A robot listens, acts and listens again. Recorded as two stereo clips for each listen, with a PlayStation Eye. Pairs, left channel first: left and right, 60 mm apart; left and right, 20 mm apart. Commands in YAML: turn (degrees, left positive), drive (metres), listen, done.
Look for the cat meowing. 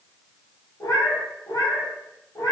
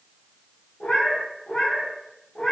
turn: 70
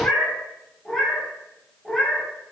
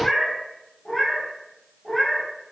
done: "Found it: a cat meowing, straight ahead, over 4 m away."